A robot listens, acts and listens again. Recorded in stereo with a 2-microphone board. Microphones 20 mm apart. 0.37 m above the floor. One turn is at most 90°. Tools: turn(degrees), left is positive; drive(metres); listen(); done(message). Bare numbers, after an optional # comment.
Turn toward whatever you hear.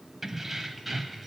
turn(30)
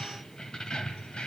# So it is at 125° left.
turn(90)
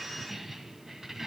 # The keys jangling is now 25° right.
turn(-25)
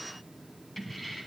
done("Found it: keys jangling, straight ahead.")